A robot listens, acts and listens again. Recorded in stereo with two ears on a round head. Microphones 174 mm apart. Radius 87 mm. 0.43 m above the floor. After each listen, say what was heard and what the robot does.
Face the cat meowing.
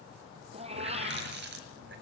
The cat meowing: about 30° right or 150° right. Turn 30° right.
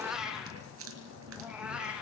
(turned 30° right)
Facing the cat meowing.